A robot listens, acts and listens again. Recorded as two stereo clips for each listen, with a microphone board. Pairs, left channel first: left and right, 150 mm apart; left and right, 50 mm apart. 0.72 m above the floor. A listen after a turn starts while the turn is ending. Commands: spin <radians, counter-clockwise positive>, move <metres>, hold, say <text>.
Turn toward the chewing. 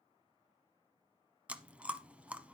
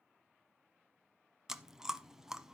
spin -0.52
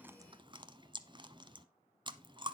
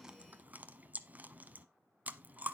spin -2.44
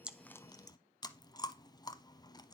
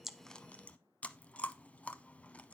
spin 0.61
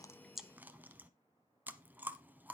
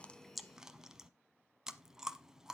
spin -0.26
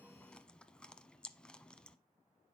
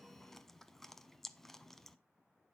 spin 0.17
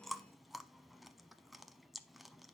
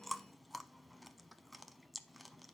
say Facing the chewing, under 1 m away.